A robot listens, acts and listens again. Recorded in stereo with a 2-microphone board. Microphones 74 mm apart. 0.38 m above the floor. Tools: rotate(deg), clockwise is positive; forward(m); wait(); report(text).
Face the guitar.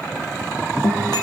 rotate(-70)
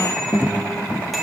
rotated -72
rotate(-40)
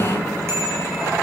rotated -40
wait()
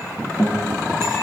report("Found it: a guitar, straight ahead.")